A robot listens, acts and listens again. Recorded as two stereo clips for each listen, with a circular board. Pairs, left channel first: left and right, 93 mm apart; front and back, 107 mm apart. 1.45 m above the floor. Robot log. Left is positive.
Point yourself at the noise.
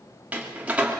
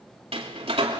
note: The door slam: 165° right.
cmd yaw -165
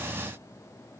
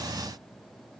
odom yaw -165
end: I heard a door slam from this way, but can't make it out now.